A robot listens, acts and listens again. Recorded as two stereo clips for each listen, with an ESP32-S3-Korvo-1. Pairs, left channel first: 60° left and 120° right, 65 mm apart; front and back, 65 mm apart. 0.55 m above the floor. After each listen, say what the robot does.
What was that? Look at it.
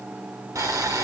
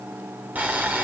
Turn 120° right.
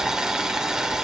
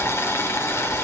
Turn 45° right.
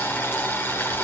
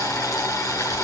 Turn 10° left.
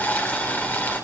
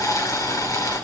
Facing the boiling, 1 to 2 m away.